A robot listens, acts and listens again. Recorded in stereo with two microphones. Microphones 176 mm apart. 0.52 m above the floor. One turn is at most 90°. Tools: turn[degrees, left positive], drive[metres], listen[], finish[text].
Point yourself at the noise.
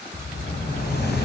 Thought: The explosion: about 65° left or 115° left.
Action: turn[65]
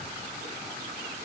Action: listen[]
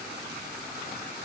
Action: finish[I heard an explosion, but can't make it out now. It was about straight ahead or 50° left.]